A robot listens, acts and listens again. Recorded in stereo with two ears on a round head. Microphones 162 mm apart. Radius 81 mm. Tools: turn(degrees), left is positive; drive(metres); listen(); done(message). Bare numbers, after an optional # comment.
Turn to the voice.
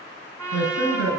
turn(90)
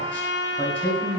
# So it is at 10° left.
turn(10)
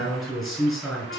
done("Facing the man speaking, over 4 m away.")